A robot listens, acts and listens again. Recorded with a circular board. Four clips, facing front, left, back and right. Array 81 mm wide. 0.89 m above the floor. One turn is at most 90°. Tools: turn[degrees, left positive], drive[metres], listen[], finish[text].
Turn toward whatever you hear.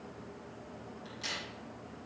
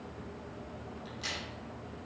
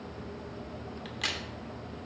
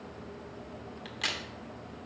Thought: The crack: 135° right.
Action: turn[-90]
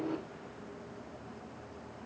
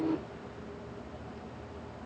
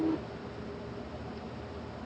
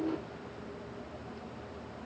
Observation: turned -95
Thought: Nothing new. It was at 40° right.
Action: turn[-40]
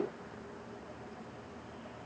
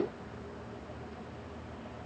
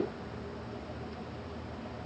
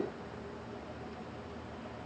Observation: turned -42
Action: finish[I heard a crack from this way, but can't make it out now.]